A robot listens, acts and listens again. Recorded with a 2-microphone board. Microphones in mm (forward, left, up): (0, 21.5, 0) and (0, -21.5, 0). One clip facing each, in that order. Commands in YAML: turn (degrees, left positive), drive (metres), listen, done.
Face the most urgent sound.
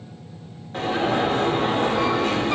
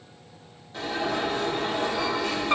turn: 45
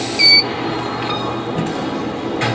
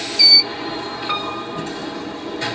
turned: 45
turn: 75
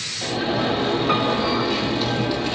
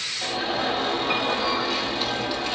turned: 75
done: "Facing the alarm."